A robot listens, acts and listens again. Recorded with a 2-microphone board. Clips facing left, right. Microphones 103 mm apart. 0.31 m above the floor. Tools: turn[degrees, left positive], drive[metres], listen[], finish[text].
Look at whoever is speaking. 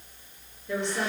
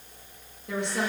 Thought: The woman speaking: about 70° right or 110° right.
Action: turn[-70]
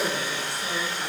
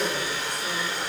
Thought: So it is at 20° right.
Action: turn[-20]
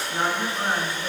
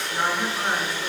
Action: finish[Found it: a woman speaking, straight ahead.]